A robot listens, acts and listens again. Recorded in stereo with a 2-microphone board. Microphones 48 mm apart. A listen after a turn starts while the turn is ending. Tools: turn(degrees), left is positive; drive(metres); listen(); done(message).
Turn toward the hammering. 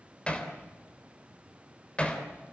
turn(degrees=25)
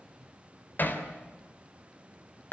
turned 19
turn(degrees=140)
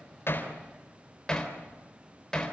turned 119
turn(degrees=20)
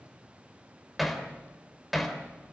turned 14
done("Facing the hammering.")